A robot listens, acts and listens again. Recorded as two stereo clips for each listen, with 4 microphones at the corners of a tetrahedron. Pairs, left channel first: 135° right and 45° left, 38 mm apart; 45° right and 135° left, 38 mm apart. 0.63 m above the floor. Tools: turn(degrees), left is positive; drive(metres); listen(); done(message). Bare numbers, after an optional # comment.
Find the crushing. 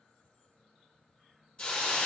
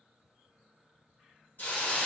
listen()
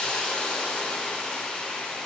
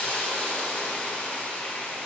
listen()
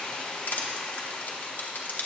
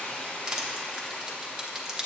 # The crushing: 155° right.
turn(-155)
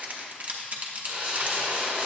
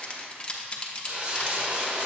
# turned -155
# The crushing is now 10° left.
turn(10)
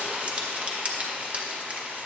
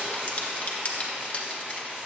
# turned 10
done("Facing the crushing, under 1 m away.")